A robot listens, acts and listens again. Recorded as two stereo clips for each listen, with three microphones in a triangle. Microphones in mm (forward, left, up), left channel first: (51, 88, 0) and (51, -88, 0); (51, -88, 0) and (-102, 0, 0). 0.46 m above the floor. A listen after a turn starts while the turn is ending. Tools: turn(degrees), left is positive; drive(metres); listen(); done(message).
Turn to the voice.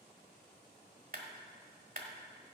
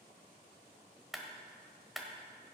listen()
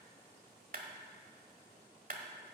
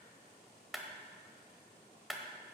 listen()
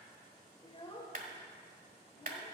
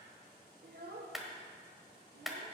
turn(degrees=145)
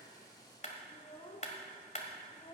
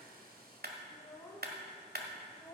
turn(degrees=40)
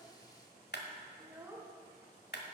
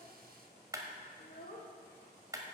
turn(degrees=-15)
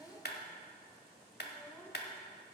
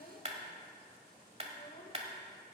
done("Facing the child speaking.")